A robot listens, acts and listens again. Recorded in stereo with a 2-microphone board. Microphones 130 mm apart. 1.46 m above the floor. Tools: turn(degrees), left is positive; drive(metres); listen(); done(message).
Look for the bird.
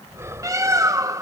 turn(degrees=-25)
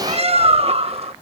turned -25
turn(degrees=-130)
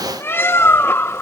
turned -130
turn(degrees=20)
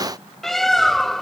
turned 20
done("Found it: a bird, straight ahead.")